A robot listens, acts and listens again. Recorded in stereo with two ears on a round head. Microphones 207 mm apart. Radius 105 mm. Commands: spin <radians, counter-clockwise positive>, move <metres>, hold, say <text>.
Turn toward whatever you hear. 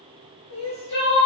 spin 1.57
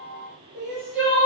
say Found it: crying, straight ahead, 1 to 2 m away.